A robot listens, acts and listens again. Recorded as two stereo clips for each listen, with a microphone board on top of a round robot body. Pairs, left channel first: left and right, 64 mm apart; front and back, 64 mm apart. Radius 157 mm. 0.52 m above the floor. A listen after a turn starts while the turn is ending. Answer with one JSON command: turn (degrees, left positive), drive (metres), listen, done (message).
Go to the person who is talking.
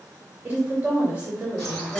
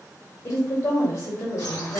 {"turn": -25}
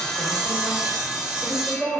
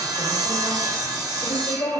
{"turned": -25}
{"drive": 1.0}
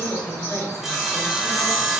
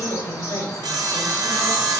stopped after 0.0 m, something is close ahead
{"done": "Something is in my way. I am facing the woman speaking but have not reached it."}